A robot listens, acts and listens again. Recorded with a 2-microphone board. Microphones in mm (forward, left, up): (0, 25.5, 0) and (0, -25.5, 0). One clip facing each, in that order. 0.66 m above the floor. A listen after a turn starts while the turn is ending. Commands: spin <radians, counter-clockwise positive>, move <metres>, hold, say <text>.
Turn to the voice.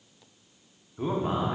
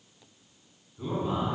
spin 0.96
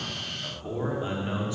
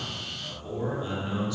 spin 0.52
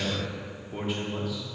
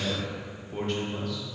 spin 0.17
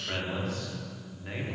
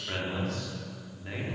say Found it: a man speaking, straight ahead.